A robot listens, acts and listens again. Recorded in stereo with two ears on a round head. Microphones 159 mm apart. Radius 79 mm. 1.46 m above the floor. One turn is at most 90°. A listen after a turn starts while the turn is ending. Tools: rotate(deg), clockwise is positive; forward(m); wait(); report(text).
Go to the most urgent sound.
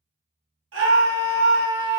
rotate(75)
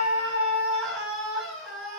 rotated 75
forward(1.0)
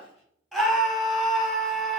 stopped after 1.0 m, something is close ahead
report("I am next to the scream.")